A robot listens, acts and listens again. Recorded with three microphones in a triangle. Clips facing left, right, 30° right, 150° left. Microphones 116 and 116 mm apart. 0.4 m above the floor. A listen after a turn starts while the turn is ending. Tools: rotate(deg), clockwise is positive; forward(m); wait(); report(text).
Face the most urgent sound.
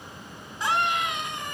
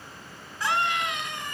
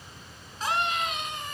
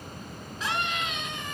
rotate(-20)
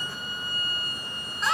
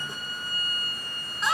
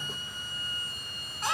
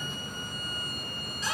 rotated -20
report("Facing the scream.")